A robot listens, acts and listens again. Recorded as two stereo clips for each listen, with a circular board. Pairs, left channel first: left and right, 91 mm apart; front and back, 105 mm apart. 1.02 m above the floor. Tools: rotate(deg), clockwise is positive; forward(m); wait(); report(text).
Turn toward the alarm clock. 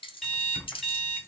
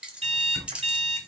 rotate(-175)
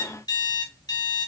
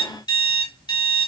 rotate(-45)
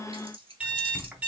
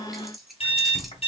rotate(15)
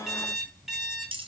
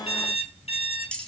report("Found it: an alarm clock, straight ahead, 2 to 4 m away.")